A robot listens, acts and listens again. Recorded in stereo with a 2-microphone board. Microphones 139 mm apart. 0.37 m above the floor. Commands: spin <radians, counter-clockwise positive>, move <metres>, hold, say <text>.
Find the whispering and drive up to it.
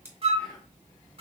spin 0.52
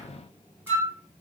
hold
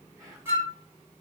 spin -0.35
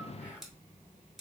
spin -0.17
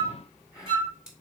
move 1.0
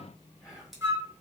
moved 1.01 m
move 1.0
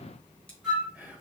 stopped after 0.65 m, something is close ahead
spin -0.26
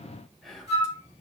say Arrived at the whispering, straight ahead.